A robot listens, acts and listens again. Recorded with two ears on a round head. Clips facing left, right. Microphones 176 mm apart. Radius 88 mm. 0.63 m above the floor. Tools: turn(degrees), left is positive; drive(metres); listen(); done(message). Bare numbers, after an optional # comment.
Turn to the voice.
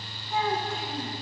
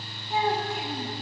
# The child speaking: about 15° right or 165° right.
turn(-15)
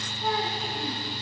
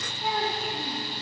turn(-30)
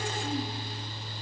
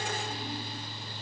listen()
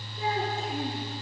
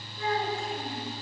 # So it is at 20° left.
turn(20)
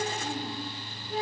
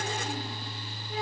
done("Facing the child speaking, over 4 m away.")